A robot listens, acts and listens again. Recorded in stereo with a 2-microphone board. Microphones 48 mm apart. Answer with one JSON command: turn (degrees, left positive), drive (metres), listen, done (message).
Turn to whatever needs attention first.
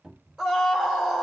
{"turn": -30}
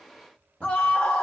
{"turn": 25}
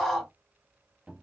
{"done": "Found it: a scream, straight ahead."}